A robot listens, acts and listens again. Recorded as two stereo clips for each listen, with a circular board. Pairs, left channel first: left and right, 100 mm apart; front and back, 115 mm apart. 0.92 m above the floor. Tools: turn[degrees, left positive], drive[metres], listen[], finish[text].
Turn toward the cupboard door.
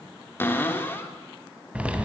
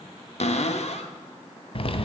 Thought: The cupboard door: 20° left.
Action: turn[20]
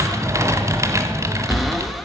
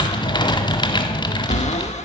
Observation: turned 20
Action: listen[]
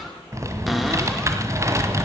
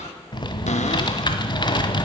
Action: finish[Facing the cupboard door, 1 to 2 m away.]